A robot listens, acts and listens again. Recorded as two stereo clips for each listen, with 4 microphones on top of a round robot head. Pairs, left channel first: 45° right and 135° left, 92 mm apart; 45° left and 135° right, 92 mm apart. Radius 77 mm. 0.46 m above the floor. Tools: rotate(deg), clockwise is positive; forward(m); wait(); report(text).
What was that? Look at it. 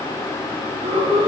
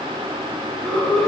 rotate(-130)
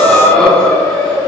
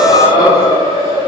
rotate(-40)
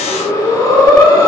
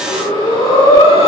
rotate(-10)
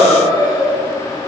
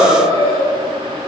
report("Found it: breathing, straight ahead, 2 to 4 m away.")